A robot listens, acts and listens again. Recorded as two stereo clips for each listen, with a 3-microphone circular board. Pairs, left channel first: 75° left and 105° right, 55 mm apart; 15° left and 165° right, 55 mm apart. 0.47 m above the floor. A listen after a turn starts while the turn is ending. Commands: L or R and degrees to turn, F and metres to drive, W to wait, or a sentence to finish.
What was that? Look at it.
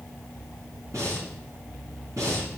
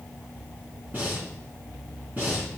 R110
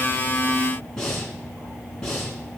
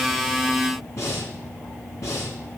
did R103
Found it: breathing, straight ahead.